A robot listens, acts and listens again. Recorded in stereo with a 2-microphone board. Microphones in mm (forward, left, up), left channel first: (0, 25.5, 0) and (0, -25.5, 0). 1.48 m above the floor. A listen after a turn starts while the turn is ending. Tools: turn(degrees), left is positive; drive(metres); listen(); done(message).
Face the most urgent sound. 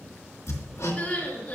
turn(degrees=30)
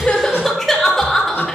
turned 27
done("Found it: crying, straight ahead, 1 to 2 m away.")